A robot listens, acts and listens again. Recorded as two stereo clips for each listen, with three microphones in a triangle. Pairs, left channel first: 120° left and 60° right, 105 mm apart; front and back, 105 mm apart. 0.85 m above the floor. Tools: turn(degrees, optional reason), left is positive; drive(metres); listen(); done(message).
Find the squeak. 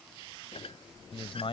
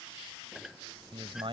turn(degrees=95, reason="The squeak: 95° left.")
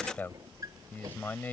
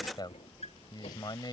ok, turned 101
done("Found it: a squeak, straight ahead.")